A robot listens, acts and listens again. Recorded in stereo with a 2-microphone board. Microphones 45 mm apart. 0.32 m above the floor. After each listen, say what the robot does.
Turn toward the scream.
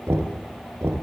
Keep listening.
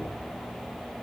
Keep listening.
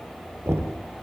I can't make out a scream, only knocking.